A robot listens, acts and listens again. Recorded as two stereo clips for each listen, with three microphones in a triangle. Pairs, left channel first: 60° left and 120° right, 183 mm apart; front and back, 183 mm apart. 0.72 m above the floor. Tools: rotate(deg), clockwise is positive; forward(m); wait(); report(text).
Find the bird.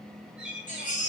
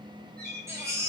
rotate(-155)
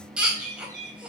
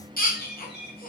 rotate(-15)
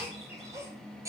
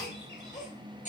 wait()
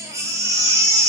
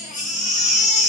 wait()
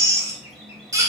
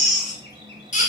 report("I heard a bird from this way, but can't make it out now.")